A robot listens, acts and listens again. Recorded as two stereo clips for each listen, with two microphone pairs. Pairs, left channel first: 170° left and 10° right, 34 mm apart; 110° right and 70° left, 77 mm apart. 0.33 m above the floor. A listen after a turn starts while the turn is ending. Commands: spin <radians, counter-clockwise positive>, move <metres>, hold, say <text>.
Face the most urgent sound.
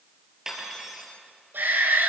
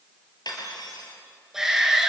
spin -0.26
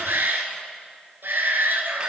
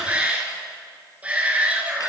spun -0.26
say Found it: a shout, straight ahead, over 4 m away.